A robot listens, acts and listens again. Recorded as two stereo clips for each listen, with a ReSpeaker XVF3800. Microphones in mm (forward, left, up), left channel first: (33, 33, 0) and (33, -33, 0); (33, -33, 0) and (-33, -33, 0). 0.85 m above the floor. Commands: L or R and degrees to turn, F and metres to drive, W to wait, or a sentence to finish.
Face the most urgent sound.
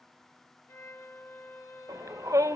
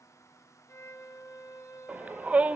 R115
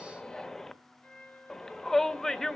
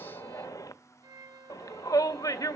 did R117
Found it: a shout, straight ahead, under 1 m away.